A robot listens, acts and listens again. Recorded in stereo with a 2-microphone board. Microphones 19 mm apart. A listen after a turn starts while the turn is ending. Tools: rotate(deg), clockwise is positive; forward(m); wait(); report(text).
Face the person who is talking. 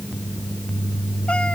wait()
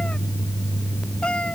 wait()
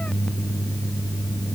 report("I can't make out anyone speaking to turn to.")